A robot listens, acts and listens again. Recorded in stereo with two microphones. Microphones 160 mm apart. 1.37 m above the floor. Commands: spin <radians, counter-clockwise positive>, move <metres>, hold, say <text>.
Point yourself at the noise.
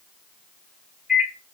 spin -0.52
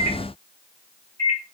spin 0.44
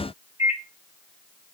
spin -0.26
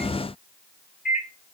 say Facing the microwave, 1 to 2 m away.